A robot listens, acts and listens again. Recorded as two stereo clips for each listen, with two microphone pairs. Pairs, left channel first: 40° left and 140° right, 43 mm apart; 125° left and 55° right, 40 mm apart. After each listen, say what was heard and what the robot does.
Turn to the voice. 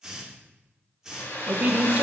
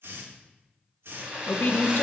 The woman speaking: 165° left. Turn 165° left.
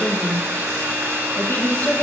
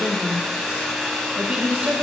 Found it: a woman speaking, straight ahead, under 1 m away.